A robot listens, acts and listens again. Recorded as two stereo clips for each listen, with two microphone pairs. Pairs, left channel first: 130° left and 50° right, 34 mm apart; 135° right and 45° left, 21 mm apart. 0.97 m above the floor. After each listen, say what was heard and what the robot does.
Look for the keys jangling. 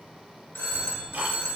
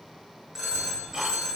The keys jangling: 75° left. Turn 75° left.
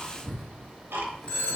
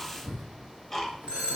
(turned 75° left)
The keys jangling is now 50° left. Turn 50° left.
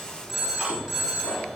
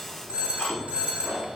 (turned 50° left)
The keys jangling is now 45° left. Turn 45° left.
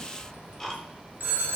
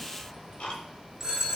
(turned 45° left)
The keys jangling is now 20° left. Turn 20° left.
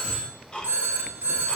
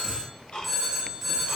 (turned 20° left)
Facing the keys jangling.